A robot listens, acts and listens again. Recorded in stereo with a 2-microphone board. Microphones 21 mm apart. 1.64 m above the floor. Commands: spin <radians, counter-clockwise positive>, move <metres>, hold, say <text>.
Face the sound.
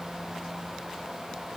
hold
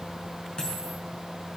spin 0.79
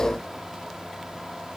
hold
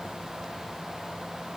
say I heard a dropped coin, but can't make it out now. It was about straight ahead or 90° left.